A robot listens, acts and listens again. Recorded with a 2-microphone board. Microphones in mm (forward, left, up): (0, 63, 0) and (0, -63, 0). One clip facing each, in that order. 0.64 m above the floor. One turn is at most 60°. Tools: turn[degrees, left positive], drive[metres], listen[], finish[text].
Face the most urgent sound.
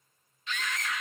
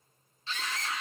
Thought: The scream: about 30° right or 150° right.
Action: turn[-30]
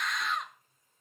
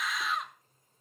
Action: finish[Found it: a scream, straight ahead.]